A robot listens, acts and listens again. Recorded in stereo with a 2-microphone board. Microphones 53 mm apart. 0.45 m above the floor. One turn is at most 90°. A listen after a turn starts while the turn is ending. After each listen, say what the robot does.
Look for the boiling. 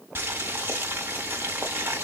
Turn 40° right.
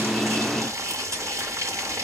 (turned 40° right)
Turn 90° right.
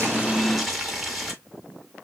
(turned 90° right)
Found it: boiling, straight ahead, 1 to 2 m away.